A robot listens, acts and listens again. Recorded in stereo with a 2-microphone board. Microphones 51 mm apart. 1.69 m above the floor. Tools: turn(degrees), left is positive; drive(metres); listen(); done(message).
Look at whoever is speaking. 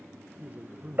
turn(degrees=-30)
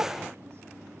listen()
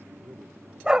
turn(degrees=-120)
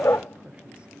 listen()
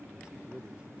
turn(degrees=-25)
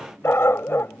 listen()
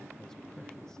listen()
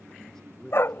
turn(degrees=10)
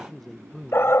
done("Found it: a man speaking, straight ahead.")